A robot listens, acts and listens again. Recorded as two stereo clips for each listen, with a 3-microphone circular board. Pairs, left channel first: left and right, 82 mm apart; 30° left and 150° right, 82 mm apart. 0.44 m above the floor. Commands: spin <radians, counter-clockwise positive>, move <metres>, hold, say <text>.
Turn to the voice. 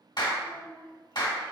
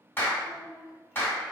spin -2.01
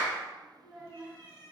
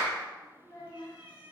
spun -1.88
say Found it: a child speaking, straight ahead.